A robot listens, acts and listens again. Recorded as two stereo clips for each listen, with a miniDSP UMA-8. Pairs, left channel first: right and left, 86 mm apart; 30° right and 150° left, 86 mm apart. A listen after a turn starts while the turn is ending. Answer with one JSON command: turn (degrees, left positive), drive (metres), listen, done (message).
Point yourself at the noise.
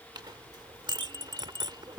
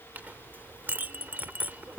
{"turn": 85}
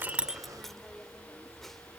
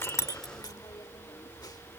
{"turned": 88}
{"done": "Facing the clink."}